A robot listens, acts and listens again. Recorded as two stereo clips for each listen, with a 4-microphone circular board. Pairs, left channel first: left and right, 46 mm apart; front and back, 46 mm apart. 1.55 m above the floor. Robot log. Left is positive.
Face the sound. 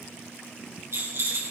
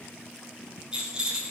note: The rattle: 110° right.
cmd yaw -110
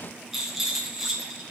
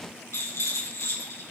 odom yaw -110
end: Facing the rattle.